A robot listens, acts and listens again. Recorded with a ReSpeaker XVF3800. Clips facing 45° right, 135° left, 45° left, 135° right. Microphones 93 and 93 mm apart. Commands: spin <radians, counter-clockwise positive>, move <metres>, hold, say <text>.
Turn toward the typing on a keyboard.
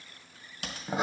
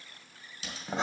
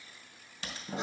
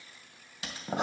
spin -0.96
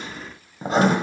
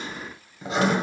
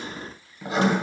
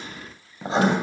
hold
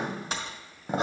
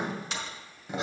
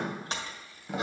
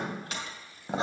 spin -0.17
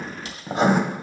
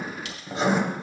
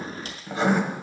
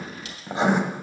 hold
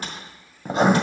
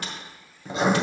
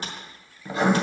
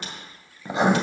say Found it: typing on a keyboard, straight ahead.